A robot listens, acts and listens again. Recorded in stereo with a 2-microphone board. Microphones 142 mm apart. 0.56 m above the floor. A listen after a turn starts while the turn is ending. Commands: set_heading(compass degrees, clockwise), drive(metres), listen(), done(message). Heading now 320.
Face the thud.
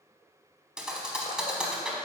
set_heading(350)
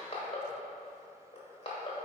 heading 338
listen()
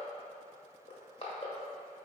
done("I heard a thud, but can't make it out now. It was about 15° left or 155° right.")